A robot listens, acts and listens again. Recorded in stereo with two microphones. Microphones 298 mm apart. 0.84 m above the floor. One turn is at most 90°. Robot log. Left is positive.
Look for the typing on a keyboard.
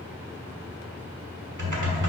cmd yaw -90
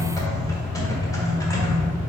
note: So it is at 10° left.
cmd yaw +10
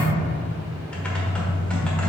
end: Facing the typing on a keyboard.